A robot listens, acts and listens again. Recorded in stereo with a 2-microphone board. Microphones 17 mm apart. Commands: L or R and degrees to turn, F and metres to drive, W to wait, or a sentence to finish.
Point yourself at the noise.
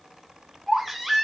R25
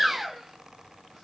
R130
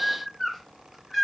L15
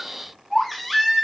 Facing the baby crying, 1 to 2 m away.